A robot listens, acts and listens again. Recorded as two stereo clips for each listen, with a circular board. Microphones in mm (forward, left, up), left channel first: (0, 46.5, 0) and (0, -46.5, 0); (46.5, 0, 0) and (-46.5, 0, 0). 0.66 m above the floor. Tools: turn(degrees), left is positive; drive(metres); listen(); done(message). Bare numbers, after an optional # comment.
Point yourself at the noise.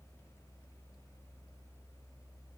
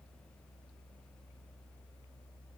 listen()
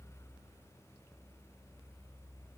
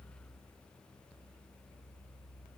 listen()
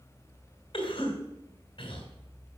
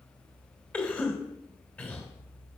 # The cough: 75° left.
turn(75)
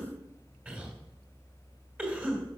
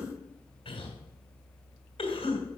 # The cough is now 15° right.
turn(-15)
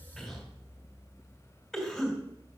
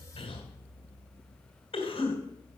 done("Found it: a cough, straight ahead.")